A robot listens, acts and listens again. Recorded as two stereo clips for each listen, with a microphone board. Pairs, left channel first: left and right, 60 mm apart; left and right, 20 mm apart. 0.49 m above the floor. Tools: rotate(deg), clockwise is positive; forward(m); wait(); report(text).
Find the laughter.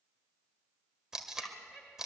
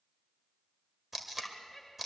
rotate(-30)
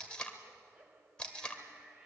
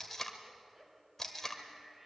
rotate(30)
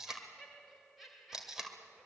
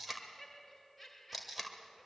report("Facing the laughter, 2 to 4 m away.")